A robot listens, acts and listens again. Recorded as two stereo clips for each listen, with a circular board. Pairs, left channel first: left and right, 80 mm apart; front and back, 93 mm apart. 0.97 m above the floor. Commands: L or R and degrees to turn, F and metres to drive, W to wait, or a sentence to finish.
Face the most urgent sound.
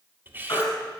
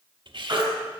L135
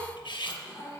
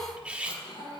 W
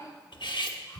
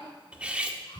W
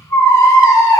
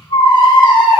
L35
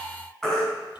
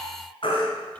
Found it: a baby crying, straight ahead, 2 to 4 m away.